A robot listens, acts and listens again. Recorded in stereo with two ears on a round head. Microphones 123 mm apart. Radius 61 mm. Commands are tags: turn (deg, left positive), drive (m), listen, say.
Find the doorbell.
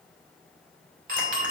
<turn deg="-60"/>
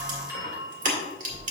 <turn deg="-20"/>
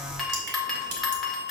<say>Facing the doorbell.</say>